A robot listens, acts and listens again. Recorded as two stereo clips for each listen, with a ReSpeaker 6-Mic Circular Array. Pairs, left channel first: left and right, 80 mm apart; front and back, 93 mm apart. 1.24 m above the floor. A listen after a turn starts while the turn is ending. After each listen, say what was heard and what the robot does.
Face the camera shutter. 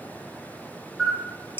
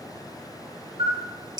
The camera shutter: 175° right. Turn 175° right.
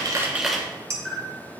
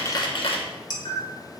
Found it: a camera shutter, straight ahead.